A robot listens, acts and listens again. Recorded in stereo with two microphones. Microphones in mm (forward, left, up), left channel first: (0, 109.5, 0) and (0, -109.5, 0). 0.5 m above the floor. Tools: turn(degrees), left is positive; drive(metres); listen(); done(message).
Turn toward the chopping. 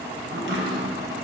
turn(degrees=-60)
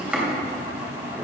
done("Found it: chopping, straight ahead, 2 to 4 m away.")